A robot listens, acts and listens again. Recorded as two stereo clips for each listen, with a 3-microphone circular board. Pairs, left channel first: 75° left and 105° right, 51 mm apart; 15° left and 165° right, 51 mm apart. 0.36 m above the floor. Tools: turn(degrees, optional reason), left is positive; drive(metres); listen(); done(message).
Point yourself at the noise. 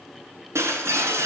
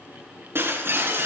turn(degrees=-130, reason="The breaking glass: 130° right.")
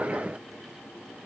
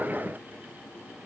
done("I heard breaking glass from this way, but can't make it out now.")